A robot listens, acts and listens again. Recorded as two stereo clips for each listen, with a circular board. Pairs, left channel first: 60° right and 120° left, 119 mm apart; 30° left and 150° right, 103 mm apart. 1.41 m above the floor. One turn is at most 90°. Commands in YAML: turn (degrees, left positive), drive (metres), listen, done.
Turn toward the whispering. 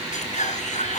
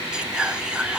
turn: -70
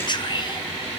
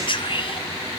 turn: -10
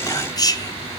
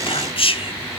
done: "Found it: whispering, straight ahead."